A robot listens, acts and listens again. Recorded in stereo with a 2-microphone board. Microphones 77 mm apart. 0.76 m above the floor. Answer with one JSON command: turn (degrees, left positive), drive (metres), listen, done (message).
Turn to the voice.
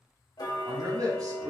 {"turn": -55}
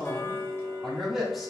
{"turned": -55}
{"done": "Found it: a man speaking, straight ahead, 1 to 2 m away."}